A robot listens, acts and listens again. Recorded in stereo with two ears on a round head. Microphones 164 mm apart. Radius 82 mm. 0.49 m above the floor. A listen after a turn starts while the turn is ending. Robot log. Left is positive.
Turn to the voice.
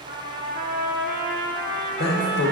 note: The man speaking: about 60° left or 120° left.
cmd yaw +60
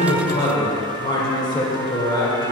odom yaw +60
note: So it is at 30° left.
cmd yaw +30
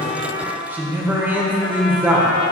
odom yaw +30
note: The man speaking is now 15° right.
cmd yaw -15
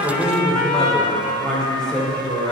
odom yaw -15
end: Facing the man speaking, 1 to 2 m away.